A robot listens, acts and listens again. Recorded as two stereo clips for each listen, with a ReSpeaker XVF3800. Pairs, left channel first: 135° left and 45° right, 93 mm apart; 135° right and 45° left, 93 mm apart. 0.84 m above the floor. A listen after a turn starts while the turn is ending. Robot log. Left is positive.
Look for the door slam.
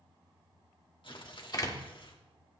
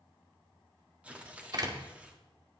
note: The door slam: 90° left.
cmd yaw +90
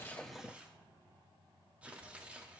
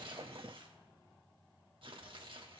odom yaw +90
end: I heard a door slam from this way, but can't make it out now.